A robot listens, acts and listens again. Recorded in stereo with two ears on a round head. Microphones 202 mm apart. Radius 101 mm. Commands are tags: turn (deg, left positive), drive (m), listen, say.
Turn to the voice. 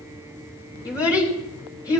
<turn deg="15"/>
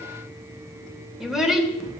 <say>Facing the child speaking.</say>